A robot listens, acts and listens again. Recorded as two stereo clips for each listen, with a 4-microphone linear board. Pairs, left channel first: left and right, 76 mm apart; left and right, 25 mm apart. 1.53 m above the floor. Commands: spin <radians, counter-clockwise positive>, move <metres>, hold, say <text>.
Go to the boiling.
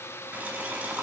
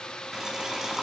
spin -0.35
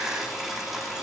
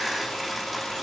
move 1.0
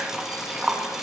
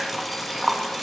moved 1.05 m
move 1.0
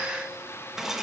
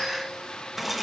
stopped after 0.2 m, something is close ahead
say I am next to the boiling.